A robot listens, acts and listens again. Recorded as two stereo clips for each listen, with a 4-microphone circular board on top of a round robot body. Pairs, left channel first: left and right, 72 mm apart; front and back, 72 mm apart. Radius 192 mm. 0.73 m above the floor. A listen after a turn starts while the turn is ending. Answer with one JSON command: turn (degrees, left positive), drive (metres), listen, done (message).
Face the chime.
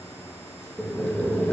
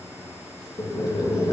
{"listen": true}
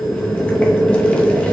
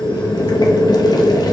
{"listen": true}
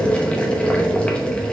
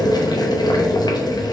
{"done": "I can't make out a chime, only boiling."}